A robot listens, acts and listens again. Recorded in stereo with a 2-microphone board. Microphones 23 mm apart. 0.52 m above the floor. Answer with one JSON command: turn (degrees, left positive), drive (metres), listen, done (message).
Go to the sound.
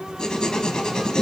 {"turn": 40}
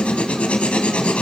{"turn": 105}
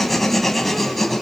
{"drive": 1.0}
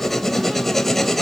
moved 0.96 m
{"turn": 10}
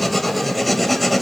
{"drive": 1.0}
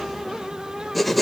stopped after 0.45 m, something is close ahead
{"done": "I am next to the writing."}